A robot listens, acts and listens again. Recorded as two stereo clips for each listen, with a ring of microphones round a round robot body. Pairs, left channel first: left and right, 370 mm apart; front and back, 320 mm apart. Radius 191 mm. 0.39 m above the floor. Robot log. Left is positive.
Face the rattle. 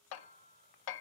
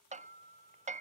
cmd idle
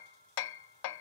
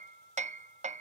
cmd idle
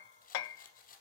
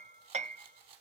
note: The rattle: 160° left.
cmd yaw +160
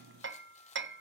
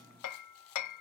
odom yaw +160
cmd idle
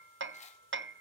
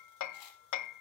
note: The rattle is now 15° left.
cmd yaw +15
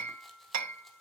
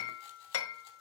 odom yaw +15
cmd idle
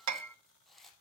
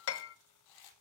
end: Facing the rattle.